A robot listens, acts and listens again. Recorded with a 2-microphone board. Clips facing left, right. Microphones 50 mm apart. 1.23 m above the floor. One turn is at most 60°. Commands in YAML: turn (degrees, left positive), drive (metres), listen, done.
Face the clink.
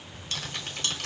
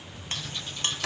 turn: -30
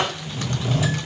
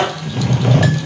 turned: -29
listen: true
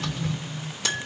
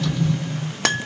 turn: -60
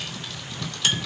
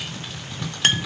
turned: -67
turn: -50
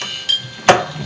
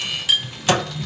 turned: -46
done: "Found it: a clink, straight ahead, under 1 m away."